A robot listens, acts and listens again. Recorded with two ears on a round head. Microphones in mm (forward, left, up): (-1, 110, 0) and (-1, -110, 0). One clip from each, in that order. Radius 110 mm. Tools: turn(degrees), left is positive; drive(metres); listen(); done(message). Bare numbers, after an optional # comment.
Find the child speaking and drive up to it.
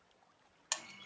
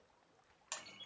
listen()
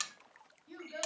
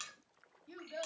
# The child speaking: about 25° right or 155° right.
turn(-25)
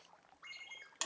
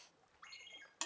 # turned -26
listen()
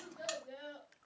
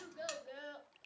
# So it is at 130° right.
turn(-130)
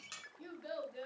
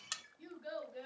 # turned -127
drive(1.0)
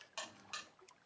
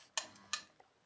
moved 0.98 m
listen()
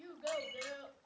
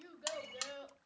drive(1.0)
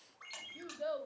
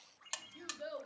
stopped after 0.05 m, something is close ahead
done("Arrived at the child speaking, straight ahead.")